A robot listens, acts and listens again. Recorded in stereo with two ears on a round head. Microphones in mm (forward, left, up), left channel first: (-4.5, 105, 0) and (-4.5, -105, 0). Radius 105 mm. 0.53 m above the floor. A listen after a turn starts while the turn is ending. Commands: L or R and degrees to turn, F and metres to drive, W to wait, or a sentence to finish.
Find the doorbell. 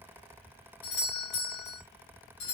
L60
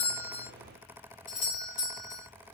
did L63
L40
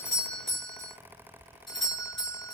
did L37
Found it: a doorbell, straight ahead, 2 to 4 m away.